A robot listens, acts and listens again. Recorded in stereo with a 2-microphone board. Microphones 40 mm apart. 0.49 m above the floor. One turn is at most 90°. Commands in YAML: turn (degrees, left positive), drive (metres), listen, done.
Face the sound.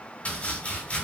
turn: 35
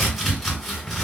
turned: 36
done: "Found it: chopping, straight ahead, 2 to 4 m away."